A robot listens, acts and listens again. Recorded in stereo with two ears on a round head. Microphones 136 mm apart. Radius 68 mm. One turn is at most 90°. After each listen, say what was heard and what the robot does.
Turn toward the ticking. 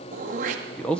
Keep listening.
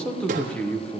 Keep listening.
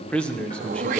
I can't make out ticking, only throat clearing and a man speaking.